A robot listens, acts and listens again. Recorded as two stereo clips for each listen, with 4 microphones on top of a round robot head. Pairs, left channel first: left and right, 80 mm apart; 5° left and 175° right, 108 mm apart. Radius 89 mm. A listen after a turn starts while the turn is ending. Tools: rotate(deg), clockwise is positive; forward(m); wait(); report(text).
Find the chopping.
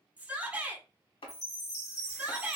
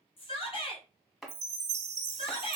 rotate(-95)
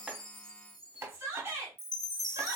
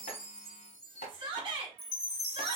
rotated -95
rotate(30)
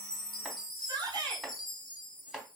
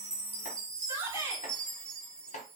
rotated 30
report("Found it: chopping, straight ahead.")